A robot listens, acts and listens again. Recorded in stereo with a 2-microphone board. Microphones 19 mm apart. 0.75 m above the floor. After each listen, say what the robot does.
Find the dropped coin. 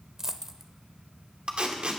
Turn 25° right.
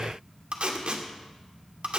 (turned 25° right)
Keep listening.
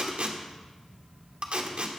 I heard a dropped coin, but can't make it out now. It was about straight ahead or 130° right.